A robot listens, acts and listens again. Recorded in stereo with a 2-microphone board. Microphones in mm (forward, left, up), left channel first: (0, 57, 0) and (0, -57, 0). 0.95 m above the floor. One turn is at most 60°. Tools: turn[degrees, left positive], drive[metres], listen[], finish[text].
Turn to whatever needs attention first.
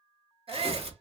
Thought: The shout: about 55° right or 125° right.
Action: turn[-55]
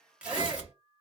Action: listen[]
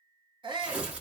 Thought: So it is at 55° right.
Action: turn[-55]
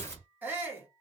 Thought: The shout is now 20° right.
Action: turn[-20]
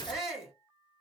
Action: finish[Found it: a shout, straight ahead.]